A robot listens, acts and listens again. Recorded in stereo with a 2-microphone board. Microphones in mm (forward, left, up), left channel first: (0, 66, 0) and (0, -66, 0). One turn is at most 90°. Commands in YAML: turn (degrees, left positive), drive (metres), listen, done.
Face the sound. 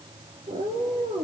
turn: -90
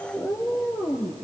turn: 20
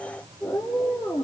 turn: 10
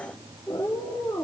done: "Found it: a cat meowing, straight ahead."